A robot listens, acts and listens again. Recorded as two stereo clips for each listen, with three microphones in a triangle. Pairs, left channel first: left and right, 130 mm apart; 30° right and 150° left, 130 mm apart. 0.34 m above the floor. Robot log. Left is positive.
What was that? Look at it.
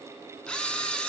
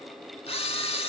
end: Found it: a camera shutter, straight ahead.